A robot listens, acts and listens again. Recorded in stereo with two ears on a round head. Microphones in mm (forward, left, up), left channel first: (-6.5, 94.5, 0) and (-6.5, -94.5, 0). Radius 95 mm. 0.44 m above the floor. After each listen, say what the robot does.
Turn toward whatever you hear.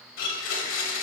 Turn 65° left.
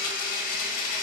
Turn 40° left.
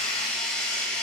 Facing the blender, 1 to 2 m away.